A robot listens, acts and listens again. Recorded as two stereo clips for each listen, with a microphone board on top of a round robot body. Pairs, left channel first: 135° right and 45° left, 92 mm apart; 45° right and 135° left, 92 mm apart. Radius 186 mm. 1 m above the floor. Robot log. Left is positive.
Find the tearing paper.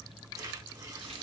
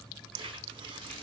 note: The tearing paper: 100° left.
cmd yaw +100
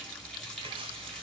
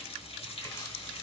note: The tearing paper is now 15° left.
cmd yaw +15
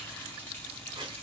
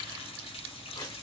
end: Found it: tearing paper, straight ahead, 1 to 2 m away.